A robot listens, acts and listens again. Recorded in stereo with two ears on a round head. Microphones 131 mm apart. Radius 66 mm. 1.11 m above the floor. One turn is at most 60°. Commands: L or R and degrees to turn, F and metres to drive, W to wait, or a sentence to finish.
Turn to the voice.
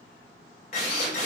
W
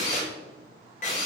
W
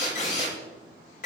I can't make out anyone speaking, only a drill.